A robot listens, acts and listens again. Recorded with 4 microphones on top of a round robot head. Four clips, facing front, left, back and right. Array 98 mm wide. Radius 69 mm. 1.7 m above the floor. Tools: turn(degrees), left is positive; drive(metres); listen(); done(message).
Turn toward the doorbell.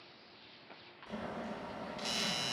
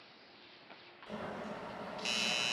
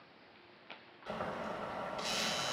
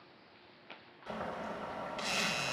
turn(degrees=85)
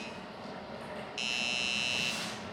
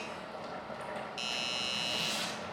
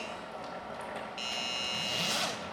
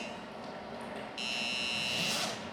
turn(degrees=10)
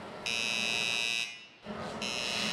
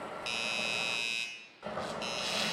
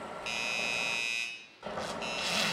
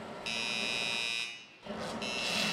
done("Facing the doorbell, 1 to 2 m away.")